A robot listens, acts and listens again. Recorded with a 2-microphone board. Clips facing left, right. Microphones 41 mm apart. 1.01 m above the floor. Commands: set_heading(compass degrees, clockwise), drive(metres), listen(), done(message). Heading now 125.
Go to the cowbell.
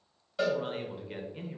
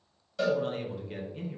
set_heading(105)
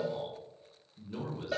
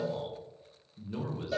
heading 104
set_heading(324)
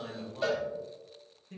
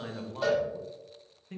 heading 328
drive(1.0)
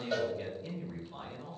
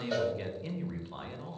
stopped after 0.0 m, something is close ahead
done("Something is in my way. I am facing the cowbell but have not reached it.")